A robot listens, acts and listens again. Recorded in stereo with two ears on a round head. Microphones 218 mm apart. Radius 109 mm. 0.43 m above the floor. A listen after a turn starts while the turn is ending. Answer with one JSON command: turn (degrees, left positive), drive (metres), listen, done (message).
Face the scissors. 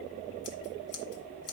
{"turn": 75}
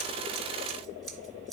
{"done": "Facing the scissors."}